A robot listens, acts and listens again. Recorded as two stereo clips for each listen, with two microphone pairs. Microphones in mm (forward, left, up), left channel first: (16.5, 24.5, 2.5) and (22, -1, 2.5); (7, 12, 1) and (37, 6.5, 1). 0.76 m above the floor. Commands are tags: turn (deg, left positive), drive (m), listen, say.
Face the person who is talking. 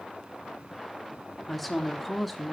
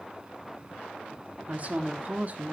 <turn deg="15"/>
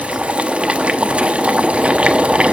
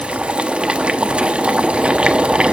<listen/>
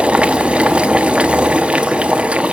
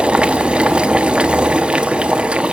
<listen/>
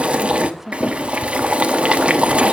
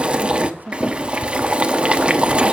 <say>Found it: a woman speaking, straight ahead.</say>